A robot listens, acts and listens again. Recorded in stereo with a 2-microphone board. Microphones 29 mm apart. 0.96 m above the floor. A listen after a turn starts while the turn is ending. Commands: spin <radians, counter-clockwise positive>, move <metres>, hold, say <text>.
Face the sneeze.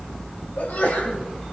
spin 1.57
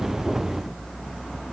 say Facing where the sneeze came from. I can't hear it now.